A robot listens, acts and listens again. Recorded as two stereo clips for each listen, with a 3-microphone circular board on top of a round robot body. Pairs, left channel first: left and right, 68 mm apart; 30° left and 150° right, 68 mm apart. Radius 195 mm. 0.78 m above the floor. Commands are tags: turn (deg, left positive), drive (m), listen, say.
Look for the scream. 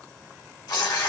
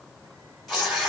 <listen/>
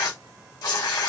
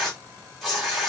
<listen/>
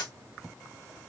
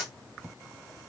<say>I can't make out a scream to turn to.</say>